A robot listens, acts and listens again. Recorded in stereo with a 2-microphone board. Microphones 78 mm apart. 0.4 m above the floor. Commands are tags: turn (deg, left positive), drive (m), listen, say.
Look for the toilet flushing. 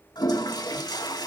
<turn deg="65"/>
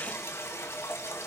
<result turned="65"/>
<turn deg="40"/>
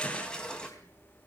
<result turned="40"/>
<turn deg="15"/>
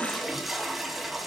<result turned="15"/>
<say>Facing the toilet flushing.</say>